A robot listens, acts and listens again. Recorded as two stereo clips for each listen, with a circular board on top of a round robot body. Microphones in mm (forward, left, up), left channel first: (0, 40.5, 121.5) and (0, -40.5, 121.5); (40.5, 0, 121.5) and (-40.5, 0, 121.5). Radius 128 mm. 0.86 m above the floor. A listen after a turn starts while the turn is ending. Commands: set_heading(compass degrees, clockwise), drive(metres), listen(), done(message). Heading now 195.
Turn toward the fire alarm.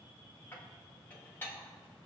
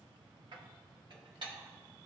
listen()
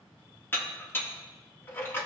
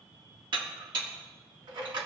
listen()
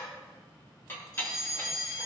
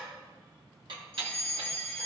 set_heading(120)
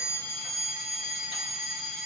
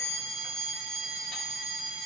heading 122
done("Found it: a fire alarm, straight ahead.")